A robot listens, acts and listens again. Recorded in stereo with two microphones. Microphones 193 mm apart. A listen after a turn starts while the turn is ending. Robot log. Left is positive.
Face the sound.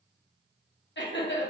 note: The laughter: about 70° left or 110° left.
cmd yaw +70
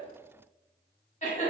note: So it is at 35° left.
cmd yaw +35
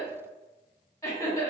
note: The laughter is now 10° left.
cmd yaw +10
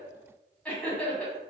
end: Facing the laughter.